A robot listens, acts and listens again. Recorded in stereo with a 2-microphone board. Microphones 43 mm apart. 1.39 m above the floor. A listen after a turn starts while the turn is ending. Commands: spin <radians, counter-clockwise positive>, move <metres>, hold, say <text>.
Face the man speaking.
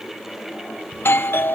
hold
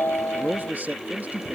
spin -0.70
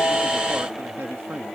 spin -2.01
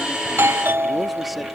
hold
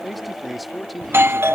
say Facing the man speaking.